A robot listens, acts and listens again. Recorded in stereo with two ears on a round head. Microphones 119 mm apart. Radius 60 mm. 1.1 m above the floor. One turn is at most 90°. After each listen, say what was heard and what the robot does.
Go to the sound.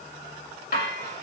The dishes clattering: about 75° left or 105° left. Turn 75° left.
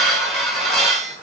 Drive 1.0 m forward.
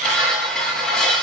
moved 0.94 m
Drive 1.0 m forward.
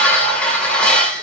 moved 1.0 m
The dishes clattering is now 10° left. Turn 10° left.
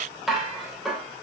Drive 1.0 m forward.
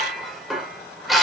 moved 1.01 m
Drive 1.0 m forward.
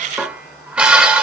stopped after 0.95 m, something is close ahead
The dishes clattering is now 10° right. Turn 10° right.
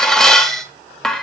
I am next to the dishes clattering.